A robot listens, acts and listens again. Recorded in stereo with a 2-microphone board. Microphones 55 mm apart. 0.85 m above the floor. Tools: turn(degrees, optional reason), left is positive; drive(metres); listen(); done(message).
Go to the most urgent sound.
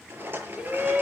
turn(degrees=-25, reason="The shout: about 25° right or 155° right.")
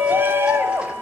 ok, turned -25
turn(degrees=-130, reason="So it is at 130° right.")
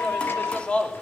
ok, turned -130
turn(degrees=25, reason="The shout is now 25° left.")
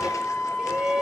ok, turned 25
turn(degrees=-15, reason="The shout is now 15° right.")
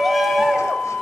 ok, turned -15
drive(metres=1.0)
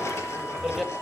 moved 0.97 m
drive(metres=1.0)
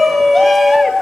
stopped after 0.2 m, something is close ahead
done("Arrived at the shout, straight ahead.")